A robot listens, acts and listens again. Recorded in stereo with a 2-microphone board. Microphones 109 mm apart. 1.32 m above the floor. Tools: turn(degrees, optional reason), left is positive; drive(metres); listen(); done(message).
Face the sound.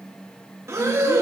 turn(degrees=-25, reason="The breathing: about 25° right or 155° right.")
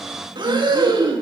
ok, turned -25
turn(degrees=-125, reason="So it is at 125° right.")
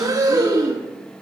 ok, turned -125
turn(degrees=-40, reason="The breathing is now 40° right.")
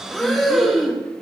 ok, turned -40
done("Found it: breathing, straight ahead.")